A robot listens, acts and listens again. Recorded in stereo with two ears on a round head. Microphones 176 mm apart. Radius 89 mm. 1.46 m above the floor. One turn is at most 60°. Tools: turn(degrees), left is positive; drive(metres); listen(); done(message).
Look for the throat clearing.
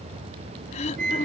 turn(degrees=35)
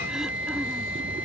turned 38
listen()
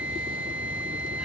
listen()
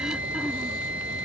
done("I heard throat clearing, but can't make it out now. It was about 5° right or 105° left.")